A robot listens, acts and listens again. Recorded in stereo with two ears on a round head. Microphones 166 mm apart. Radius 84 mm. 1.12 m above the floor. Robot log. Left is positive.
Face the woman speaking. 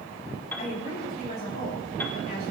note: The woman speaking: about 55° left or 125° left.
cmd yaw +55
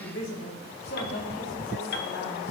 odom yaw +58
note: So it is at 60° left.
cmd yaw +60
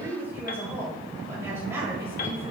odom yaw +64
note: The woman speaking is now 15° right.
cmd yaw -15
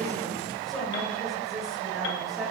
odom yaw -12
end: Found it: a woman speaking, straight ahead.